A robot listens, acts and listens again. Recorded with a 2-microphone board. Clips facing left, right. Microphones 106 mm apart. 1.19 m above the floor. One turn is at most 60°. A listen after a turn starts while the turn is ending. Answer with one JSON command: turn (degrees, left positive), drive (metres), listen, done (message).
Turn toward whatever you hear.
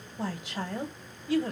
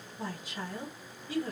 {"turn": 60}
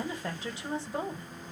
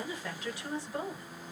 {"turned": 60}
{"turn": 25}
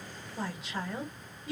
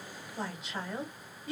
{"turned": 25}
{"done": "Found it: a woman speaking, straight ahead, 1 to 2 m away."}